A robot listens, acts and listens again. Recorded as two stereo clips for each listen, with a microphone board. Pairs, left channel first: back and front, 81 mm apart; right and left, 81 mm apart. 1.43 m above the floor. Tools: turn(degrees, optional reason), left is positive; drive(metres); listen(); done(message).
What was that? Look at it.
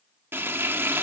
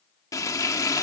turn(degrees=-55, reason="The frying: 55° right.")
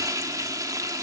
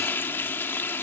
turn(degrees=-35, reason="The frying is now 35° right.")
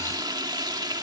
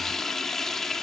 done("Found it: frying, straight ahead, 1 to 2 m away.")